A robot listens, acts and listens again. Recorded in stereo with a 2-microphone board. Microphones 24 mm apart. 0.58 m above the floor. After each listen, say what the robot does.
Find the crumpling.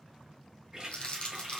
Turn 50° left.
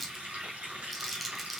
Facing the crumpling.